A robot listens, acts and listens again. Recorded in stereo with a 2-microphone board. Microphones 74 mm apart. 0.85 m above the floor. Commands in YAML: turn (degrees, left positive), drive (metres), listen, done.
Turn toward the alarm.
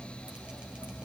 listen: true
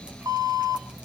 turn: -55
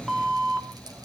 done: "Facing the alarm, 2 to 4 m away."